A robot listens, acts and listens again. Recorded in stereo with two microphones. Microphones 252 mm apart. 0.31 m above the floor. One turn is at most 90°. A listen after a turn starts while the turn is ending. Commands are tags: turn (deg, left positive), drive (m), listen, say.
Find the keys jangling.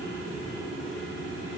<listen/>
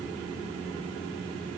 <listen/>
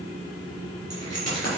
<turn deg="90"/>
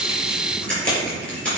<say>Facing the keys jangling, over 4 m away.</say>